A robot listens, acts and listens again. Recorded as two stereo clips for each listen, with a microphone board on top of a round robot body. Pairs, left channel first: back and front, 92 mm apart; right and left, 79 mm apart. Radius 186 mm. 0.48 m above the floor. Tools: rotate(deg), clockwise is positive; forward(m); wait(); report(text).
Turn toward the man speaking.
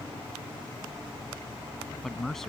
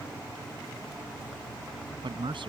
rotate(-95)
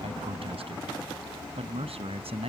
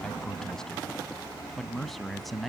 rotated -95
report("Found it: a man speaking, straight ahead.")